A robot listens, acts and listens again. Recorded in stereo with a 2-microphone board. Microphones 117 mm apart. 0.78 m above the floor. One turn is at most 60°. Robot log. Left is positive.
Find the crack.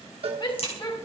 note: The crack: about 55° left or 125° left.
cmd yaw +55
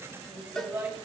cmd idle
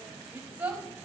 end: I heard a crack, but can't make it out now. It was about straight ahead or 70° left.